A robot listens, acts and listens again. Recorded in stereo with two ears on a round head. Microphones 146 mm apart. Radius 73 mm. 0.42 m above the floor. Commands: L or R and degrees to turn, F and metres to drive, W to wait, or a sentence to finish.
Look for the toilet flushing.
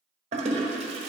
R40
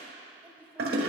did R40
R95
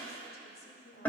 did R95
L10
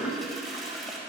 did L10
Found it: a toilet flushing, straight ahead.